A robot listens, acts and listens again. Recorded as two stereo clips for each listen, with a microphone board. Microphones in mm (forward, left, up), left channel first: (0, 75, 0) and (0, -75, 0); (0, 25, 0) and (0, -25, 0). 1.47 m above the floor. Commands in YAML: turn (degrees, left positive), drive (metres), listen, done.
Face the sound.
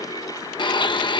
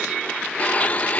turn: 30
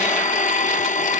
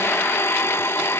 turn: 115
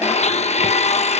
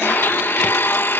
turn: 50
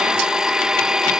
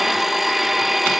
done: "Facing the blender."